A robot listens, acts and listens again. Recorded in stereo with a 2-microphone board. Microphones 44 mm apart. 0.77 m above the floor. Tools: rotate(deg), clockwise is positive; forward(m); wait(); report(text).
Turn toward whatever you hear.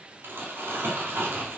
rotate(65)
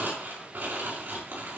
rotate(50)
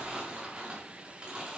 rotate(20)
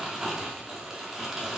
report("Found it: crumpling, straight ahead, over 4 m away.")